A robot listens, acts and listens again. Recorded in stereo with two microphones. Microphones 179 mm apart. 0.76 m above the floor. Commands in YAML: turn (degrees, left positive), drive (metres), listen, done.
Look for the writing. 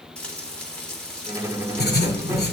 turn: 65
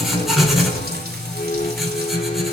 done: "Facing the writing."